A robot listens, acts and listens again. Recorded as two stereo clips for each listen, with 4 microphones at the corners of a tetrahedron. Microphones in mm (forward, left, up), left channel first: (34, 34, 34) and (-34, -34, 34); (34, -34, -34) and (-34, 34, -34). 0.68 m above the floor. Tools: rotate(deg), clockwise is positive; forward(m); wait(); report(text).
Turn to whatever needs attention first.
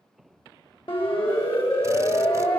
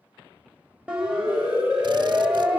rotate(-55)
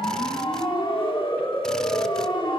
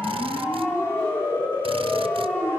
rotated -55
rotate(-15)
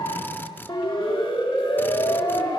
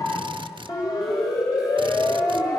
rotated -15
report("Found it: a siren, straight ahead, 2 to 4 m away.")